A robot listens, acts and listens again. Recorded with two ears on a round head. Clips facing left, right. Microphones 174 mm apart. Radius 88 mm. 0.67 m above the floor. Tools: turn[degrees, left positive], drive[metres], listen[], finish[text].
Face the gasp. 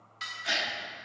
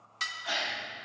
Thought: The gasp: about 25° left or 155° left.
Action: turn[25]
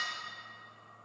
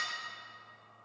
Action: listen[]
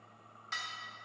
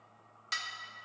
Action: finish[I heard a gasp, but can't make it out now. It was about straight ahead or 130° left.]